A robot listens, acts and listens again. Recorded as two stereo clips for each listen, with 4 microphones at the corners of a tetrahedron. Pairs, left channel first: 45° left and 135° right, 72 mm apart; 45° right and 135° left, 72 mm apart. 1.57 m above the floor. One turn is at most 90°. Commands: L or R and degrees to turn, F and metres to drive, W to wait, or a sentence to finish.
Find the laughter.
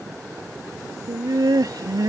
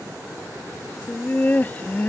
R90
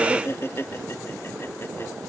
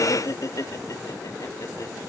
R10
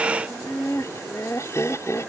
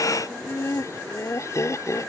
Found it: laughter, straight ahead.